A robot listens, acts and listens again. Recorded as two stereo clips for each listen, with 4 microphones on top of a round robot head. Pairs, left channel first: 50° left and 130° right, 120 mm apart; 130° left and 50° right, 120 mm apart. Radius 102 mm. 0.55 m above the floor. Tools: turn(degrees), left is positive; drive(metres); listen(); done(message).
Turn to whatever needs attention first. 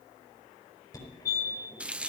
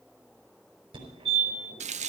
done("Facing the fire alarm, over 4 m away.")